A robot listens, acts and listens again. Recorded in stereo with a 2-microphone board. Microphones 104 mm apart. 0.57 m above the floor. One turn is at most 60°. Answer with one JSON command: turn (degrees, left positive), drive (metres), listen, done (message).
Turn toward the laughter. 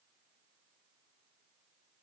{"listen": true}
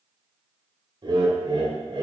{"turn": -55}
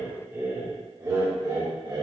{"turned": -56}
{"turn": -40}
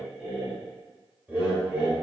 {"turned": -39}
{"turn": -15}
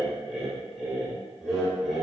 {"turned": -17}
{"done": "Found it: laughter, straight ahead."}